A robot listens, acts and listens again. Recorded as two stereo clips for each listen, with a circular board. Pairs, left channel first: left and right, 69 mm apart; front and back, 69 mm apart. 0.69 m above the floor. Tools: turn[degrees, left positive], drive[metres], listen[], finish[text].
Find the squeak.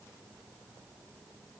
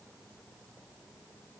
Action: listen[]
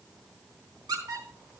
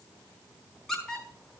Thought: The squeak: 85° right.
Action: turn[-85]
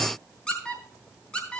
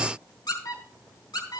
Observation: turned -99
Thought: The squeak is now 15° left.
Action: turn[15]
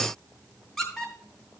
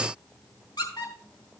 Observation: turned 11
Action: finish[Found it: a squeak, straight ahead.]